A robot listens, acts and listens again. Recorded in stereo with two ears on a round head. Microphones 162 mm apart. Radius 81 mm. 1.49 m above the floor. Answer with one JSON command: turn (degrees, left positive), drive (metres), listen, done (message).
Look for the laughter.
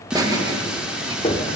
{"turn": -20}
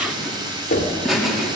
{"done": "Found it: laughter, straight ahead."}